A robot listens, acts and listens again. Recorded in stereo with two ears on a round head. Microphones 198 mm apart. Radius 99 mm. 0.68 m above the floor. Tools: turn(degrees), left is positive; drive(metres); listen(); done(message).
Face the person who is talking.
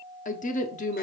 turn(degrees=35)
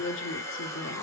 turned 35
turn(degrees=110)
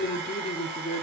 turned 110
turn(degrees=45)
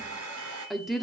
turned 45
done("Facing the woman speaking, 1 to 2 m away.")